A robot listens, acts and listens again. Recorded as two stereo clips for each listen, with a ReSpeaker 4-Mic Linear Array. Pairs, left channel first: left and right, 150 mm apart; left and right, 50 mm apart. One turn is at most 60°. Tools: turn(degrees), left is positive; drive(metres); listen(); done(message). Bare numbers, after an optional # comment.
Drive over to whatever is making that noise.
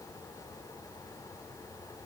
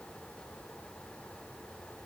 listen()
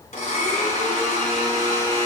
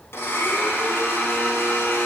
# The blender: about 50° left or 130° left.
turn(50)
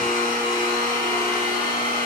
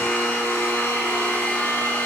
# So it is at 75° left.
turn(60)
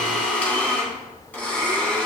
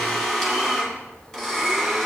# The blender is now 10° left.
turn(10)
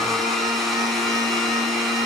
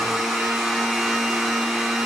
drive(1.0)
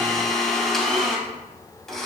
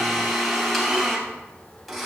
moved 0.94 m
drive(1.0)
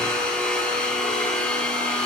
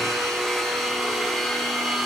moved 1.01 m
# The blender is now 10° left.
turn(10)
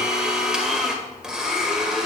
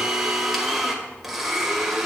drive(1.0)
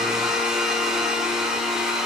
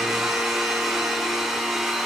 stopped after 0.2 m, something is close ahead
done("Arrived at the blender, straight ahead.")